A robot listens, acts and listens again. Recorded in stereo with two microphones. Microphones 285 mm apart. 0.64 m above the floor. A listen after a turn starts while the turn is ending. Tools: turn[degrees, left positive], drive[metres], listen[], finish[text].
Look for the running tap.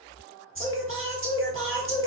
Action: listen[]
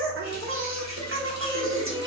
Thought: The running tap: about 70° right or 110° right.
Action: turn[-70]
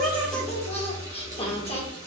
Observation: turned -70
Thought: So it is at 10° right.
Action: turn[-10]
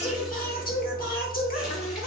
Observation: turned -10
Action: listen[]
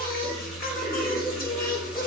Action: finish[Facing the running tap.]